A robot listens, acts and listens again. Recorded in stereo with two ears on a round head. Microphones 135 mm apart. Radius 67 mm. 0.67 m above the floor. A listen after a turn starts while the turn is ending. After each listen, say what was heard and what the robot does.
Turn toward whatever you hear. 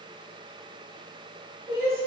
The crying: about 40° right or 140° right. Turn 40° right.
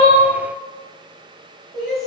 Facing the crying.